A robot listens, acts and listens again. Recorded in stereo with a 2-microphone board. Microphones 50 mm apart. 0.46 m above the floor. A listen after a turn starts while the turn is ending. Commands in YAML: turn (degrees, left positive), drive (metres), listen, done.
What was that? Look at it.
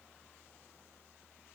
listen: true
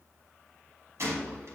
turn: -70
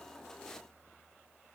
listen: true
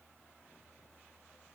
done: "I heard a gunshot, but can't make it out now. It was about straight ahead or 40° right."